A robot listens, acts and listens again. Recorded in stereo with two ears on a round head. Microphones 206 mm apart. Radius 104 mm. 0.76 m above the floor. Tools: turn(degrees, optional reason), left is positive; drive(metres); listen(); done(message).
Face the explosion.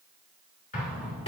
turn(degrees=30, reason="The explosion: about 30° left or 150° left.")
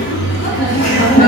listen()
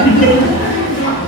done("I heard an explosion, but can't make it out now. It was about straight ahead or 120° left.")